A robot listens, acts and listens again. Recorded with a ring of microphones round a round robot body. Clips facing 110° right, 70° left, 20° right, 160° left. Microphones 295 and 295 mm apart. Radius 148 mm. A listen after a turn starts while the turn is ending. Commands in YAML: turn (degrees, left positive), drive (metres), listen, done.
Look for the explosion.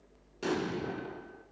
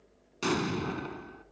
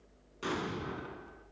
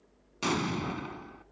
turn: 130
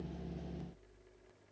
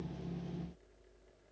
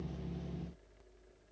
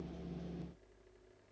done: "Facing where the explosion came from. I can't hear it now."